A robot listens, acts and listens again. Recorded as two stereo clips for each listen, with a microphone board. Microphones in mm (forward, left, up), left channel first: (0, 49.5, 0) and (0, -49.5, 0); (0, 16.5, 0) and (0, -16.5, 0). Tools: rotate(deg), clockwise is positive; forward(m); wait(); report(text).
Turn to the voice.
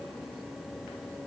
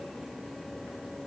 wait()
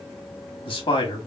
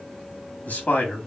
rotate(-60)
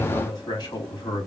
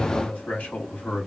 rotate(-50)
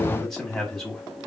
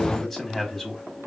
report("Found it: a man speaking, straight ahead, 1 to 2 m away.")